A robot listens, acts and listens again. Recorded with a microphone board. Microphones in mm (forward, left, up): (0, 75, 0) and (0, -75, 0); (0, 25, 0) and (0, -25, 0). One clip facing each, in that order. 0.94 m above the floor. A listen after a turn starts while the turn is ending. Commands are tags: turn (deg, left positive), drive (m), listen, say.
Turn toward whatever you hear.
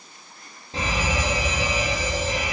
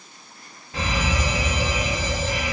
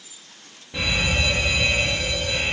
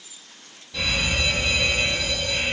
<turn deg="30"/>
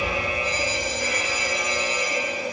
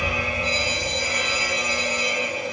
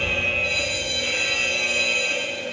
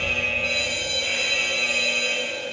<turn deg="115"/>
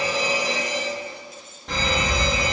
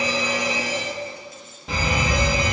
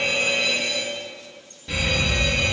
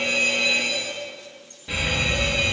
<say>Facing the fire alarm, 2 to 4 m away.</say>